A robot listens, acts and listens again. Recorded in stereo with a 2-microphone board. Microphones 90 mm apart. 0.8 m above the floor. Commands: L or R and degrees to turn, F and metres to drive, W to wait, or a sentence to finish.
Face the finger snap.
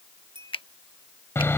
L70
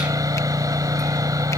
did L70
W
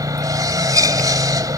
W
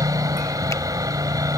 I heard a finger snap, but can't make it out now. It was about straight ahead or 40° left.